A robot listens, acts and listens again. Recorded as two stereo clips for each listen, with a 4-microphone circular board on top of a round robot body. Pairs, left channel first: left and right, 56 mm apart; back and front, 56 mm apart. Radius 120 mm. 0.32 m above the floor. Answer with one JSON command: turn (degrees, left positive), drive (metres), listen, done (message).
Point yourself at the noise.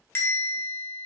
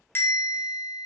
{"turn": 135}
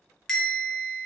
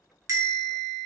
{"turn": 10}
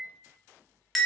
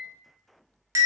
{"done": "Found it: a bell, straight ahead."}